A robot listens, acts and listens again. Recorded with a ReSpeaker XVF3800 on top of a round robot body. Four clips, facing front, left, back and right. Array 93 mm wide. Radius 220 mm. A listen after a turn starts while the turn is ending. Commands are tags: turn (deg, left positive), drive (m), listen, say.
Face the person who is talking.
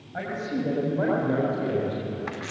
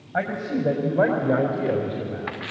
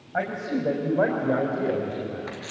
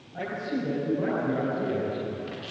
<turn deg="110"/>
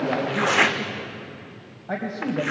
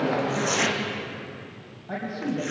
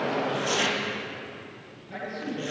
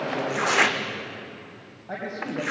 <turn deg="-10"/>
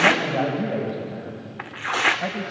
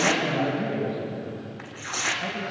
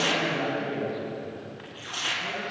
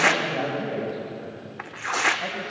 <turn deg="-15"/>
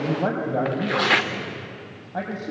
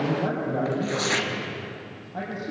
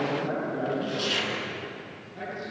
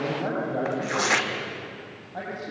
<say>Facing the man speaking, 2 to 4 m away.</say>